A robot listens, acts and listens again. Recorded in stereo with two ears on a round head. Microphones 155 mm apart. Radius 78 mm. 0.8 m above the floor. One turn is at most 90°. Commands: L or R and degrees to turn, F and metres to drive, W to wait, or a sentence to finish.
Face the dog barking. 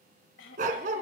R50
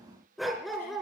Found it: a dog barking, straight ahead.